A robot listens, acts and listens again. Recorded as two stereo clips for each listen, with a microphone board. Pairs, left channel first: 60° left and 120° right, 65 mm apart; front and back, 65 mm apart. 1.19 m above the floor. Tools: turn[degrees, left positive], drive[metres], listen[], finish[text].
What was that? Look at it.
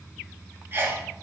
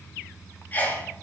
Thought: The sneeze: 65° right.
Action: turn[-65]
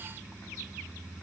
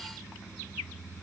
Action: finish[Facing where the sneeze came from. I can't hear it now.]